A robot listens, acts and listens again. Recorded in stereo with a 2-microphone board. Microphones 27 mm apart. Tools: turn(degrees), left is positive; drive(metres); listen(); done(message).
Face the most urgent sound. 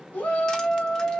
turn(degrees=60)
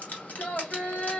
turn(degrees=60)
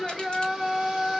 done("Facing the shout.")